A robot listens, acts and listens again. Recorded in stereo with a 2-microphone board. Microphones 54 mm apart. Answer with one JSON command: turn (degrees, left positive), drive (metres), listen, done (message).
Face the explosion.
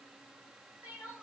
{"listen": true}
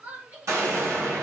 {"turn": -60}
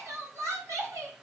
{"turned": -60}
{"listen": true}
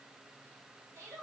{"done": "I heard an explosion, but can't make it out now. It was about straight ahead or 60° right."}